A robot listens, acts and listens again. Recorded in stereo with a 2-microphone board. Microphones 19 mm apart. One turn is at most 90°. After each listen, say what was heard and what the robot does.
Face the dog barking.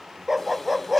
Turn 30° right.
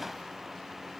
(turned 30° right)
Keep listening.
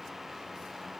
Keep listening.
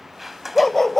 So it is at 15° left. Turn 15° left.
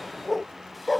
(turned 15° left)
Facing the dog barking.